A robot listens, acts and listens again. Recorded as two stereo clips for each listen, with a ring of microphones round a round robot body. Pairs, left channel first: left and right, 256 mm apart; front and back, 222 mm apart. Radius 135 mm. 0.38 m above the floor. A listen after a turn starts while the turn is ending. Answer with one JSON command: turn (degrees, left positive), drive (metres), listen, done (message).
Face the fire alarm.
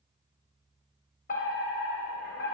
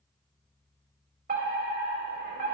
{"turn": 140}
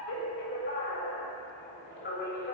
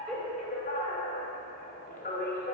{"turn": 50}
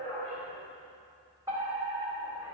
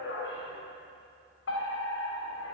{"turn": -15}
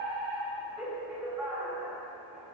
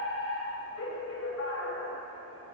{"done": "Found it: a fire alarm, straight ahead."}